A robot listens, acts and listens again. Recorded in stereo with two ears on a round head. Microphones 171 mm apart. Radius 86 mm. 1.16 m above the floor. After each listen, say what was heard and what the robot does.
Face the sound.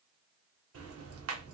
Turn 90° right.
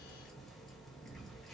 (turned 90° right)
Found it: ticking, straight ahead.